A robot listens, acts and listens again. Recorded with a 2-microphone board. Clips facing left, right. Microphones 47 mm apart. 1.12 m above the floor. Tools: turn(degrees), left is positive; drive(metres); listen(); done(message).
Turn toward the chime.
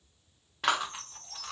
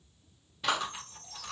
turn(degrees=55)
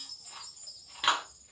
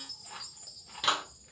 turn(degrees=60)
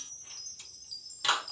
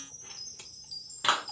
done("Facing the chime.")